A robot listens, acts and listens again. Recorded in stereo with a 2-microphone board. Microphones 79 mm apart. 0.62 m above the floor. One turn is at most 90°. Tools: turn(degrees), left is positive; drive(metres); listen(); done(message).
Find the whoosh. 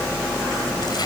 listen()
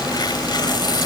listen()
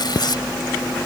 done("I can't make out a whoosh, only tearing paper.")